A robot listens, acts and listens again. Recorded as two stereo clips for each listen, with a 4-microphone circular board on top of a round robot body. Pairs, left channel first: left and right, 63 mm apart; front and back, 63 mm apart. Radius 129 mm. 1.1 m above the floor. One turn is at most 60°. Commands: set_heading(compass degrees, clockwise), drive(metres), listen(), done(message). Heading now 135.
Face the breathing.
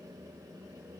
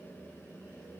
listen()
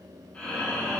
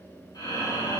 set_heading(115)
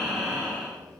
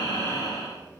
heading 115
done("Facing the breathing, over 4 m away.")